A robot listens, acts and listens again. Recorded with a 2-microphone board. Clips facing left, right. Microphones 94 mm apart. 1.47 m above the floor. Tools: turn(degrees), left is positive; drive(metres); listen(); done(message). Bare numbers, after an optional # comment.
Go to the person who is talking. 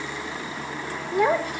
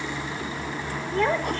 turn(30)
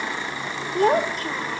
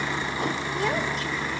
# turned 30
# So it is at 135° left.
turn(135)
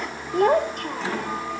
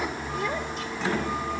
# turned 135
# The child speaking is now 55° left.
turn(55)
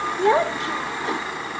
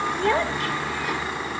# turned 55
# The child speaking is now 20° left.
turn(20)
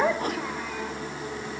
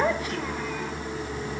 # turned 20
drive(1.0)
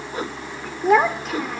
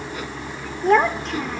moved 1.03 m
drive(1.0)
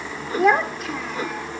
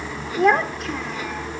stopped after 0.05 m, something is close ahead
done("Blocked. The child speaking is further on, straight ahead.")